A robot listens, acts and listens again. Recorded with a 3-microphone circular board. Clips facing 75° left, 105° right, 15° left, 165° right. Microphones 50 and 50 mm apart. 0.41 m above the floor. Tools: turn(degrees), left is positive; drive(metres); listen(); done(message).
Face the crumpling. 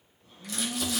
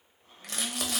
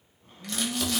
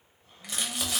turn(degrees=-90)
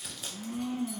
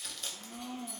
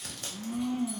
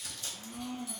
done("Found it: crumpling, straight ahead, under 1 m away.")